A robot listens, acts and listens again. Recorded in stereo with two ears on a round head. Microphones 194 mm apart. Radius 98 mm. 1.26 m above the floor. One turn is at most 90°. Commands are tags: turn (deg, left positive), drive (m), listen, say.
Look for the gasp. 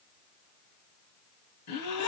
<turn deg="90"/>
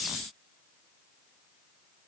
<say>I heard a gasp from this way, but can't make it out now.</say>